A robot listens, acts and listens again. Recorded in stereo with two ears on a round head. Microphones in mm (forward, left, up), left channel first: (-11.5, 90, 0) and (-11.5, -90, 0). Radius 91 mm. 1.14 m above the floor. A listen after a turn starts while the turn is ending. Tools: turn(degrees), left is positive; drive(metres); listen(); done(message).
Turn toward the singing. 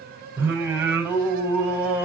turn(degrees=-30)
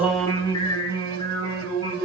turn(degrees=25)
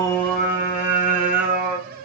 done("Facing the singing, over 4 m away.")